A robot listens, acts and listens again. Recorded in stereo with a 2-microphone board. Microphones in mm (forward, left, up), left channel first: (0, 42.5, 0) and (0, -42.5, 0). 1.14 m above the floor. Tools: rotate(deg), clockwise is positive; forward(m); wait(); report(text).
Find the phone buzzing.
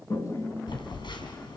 rotate(-70)
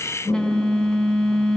rotate(-10)
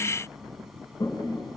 wait()
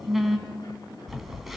report("Facing the phone buzzing.")